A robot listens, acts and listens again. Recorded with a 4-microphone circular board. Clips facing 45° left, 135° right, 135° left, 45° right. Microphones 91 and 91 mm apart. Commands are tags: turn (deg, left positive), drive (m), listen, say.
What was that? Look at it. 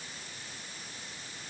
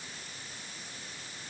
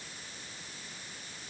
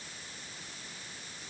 <listen/>
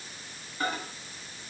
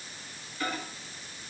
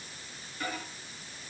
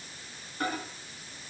<say>Facing the microwave.</say>